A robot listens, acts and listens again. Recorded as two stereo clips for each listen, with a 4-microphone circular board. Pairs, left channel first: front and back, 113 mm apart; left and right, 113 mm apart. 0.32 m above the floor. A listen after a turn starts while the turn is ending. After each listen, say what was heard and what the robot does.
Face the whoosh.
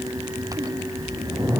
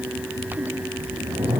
The whoosh: 110° right. Turn 110° right.
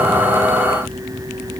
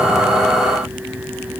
The whoosh is now 25° left. Turn 25° left.
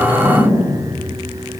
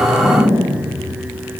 Found it: a whoosh, straight ahead.